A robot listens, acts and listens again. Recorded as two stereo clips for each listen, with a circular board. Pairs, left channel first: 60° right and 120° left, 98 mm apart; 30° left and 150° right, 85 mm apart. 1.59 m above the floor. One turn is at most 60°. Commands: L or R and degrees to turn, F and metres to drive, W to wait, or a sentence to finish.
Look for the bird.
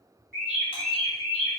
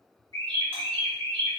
R60
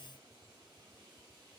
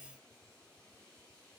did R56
R60
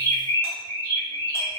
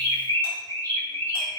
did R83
R20
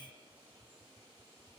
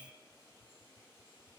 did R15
W
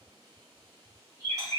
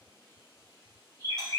Found it: a bird, straight ahead, 1 to 2 m away.